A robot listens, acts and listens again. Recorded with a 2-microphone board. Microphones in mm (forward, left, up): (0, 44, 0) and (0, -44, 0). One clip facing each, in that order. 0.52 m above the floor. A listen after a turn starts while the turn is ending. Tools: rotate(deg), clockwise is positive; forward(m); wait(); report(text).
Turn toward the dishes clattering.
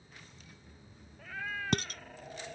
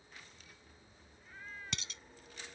rotate(-50)
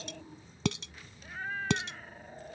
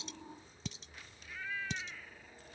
rotate(-80)
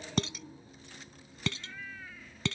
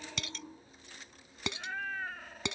rotate(20)
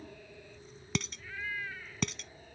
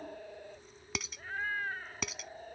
report("Found it: dishes clattering, straight ahead.")